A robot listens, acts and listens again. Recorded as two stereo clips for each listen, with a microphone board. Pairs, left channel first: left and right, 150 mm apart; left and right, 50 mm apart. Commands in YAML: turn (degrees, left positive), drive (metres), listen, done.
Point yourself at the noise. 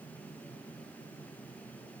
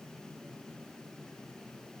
listen: true
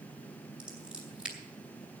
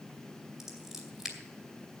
turn: -30
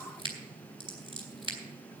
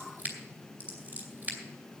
turn: -145
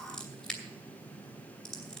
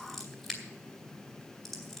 done: "Found it: scissors, straight ahead, 2 to 4 m away."